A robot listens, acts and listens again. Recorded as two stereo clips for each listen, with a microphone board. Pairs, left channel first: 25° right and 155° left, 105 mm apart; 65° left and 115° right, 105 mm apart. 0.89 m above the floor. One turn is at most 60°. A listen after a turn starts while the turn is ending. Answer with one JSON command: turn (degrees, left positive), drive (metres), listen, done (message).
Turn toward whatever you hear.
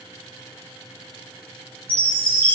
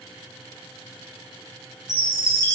{"turn": 10}
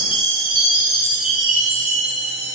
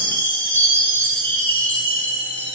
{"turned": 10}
{"done": "Found it: a chime, straight ahead, over 4 m away."}